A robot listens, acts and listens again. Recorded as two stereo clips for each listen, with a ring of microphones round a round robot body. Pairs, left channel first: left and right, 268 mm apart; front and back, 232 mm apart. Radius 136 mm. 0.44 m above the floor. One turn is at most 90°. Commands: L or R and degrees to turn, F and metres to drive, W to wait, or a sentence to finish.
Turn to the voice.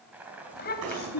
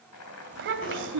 L90
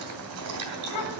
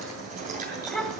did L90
L90
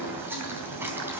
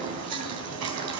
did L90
W
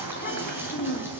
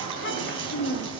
L35
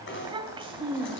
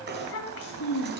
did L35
R20
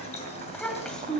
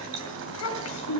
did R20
Facing the child speaking.